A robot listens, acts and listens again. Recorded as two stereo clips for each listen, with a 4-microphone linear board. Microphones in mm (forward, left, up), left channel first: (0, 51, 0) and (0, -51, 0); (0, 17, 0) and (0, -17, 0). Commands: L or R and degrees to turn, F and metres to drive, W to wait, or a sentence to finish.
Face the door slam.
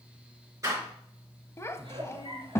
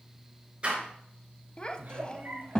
R35
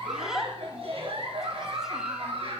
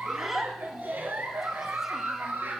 W
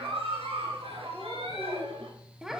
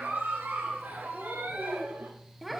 I heard a door slam, but can't make it out now. It was about straight ahead or 110° right.